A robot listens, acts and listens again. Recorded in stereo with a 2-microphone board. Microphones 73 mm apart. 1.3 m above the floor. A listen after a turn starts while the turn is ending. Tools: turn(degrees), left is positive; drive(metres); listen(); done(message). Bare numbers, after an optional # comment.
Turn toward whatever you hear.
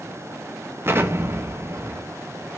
# The explosion: about 35° right or 145° right.
turn(-35)
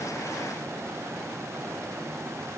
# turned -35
listen()
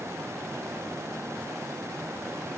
done("I heard an explosion, but can't make it out now. It was about straight ahead or 110° right.")